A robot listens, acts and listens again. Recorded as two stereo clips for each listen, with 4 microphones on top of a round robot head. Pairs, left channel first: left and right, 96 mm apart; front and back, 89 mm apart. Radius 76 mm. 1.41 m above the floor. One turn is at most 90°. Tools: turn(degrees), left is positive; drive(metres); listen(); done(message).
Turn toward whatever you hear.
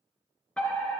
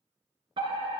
turn(degrees=90)
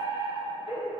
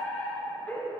turn(degrees=70)
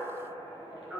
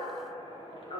done("Found it: a fire alarm, straight ahead.")